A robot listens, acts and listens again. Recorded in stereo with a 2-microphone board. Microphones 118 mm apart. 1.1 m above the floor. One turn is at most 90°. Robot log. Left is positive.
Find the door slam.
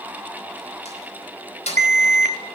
note: The door slam: about 75° left or 105° left.
cmd yaw +75
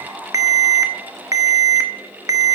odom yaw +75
cmd idle
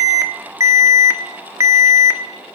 end: I heard a door slam, but can't make it out now. It was about straight ahead or 30° left.